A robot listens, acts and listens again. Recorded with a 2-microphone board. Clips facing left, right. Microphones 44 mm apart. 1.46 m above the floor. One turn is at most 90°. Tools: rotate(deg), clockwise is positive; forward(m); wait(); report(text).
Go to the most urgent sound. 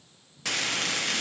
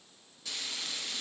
wait()
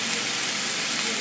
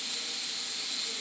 wait()
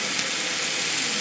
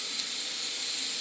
report("I can't make out anything urgent to turn to.")